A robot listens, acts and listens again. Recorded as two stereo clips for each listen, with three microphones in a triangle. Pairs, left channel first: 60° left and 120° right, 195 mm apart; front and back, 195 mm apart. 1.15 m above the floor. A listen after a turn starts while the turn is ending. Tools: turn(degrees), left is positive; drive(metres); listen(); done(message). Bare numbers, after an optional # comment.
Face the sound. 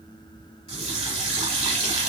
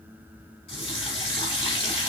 # The running tap: 60° right.
turn(-60)
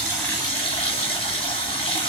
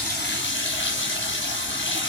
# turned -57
done("Found it: a running tap, straight ahead.")